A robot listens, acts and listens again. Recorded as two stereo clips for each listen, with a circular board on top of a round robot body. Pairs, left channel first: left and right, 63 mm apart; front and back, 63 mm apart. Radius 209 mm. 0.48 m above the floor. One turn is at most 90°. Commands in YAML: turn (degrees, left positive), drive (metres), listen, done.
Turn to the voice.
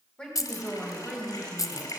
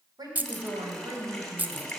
turn: 90
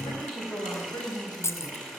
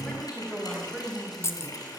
turn: 90
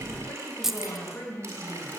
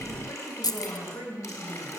turn: 40
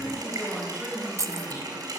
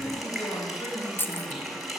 turn: -10
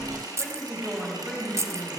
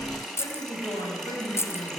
done: "Found it: a woman speaking, straight ahead, over 4 m away."